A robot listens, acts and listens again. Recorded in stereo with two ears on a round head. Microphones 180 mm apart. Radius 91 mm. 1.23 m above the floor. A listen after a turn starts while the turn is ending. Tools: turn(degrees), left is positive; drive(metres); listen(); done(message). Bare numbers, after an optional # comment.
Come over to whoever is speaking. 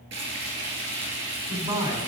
# The man speaking: about 30° right or 150° right.
turn(-30)
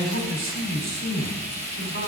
# So it is at 120° right.
turn(-120)
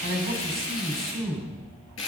drive(1.0)
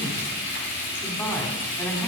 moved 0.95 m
# The man speaking is now 10° left.
turn(10)
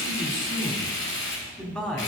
drive(1.0)
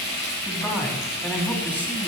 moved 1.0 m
drive(1.0)
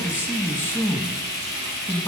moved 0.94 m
# The man speaking is now 10° left.
turn(10)
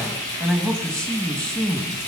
drive(1.0)
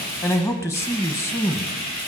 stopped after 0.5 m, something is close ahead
# The man speaking is now 15° left.
turn(15)
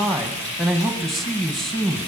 done("Arrived at the man speaking, straight ahead.")